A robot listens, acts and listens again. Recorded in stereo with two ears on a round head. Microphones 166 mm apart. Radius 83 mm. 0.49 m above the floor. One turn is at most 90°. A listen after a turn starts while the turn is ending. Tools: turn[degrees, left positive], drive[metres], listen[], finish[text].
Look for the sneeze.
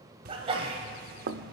Thought: The sneeze: about 30° right or 150° right.
Action: turn[-30]
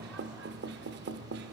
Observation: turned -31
Action: listen[]
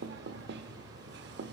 Action: finish[I heard a sneeze, but can't make it out now. It was about straight ahead or 115° right.]